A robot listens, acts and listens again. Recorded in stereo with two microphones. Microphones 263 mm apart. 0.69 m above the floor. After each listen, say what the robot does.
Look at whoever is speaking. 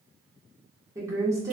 Turn 30° right.
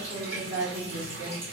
Turn 140° right.
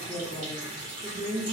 Turn 30° left.
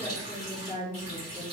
Turn 20° left.
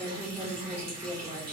Facing the woman speaking.